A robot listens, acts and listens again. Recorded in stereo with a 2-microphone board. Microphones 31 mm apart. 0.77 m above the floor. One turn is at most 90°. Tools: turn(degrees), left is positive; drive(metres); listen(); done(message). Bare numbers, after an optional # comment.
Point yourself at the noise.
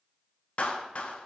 # The clap: about 50° left or 130° left.
turn(50)
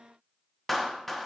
done("Facing the clap, under 1 m away.")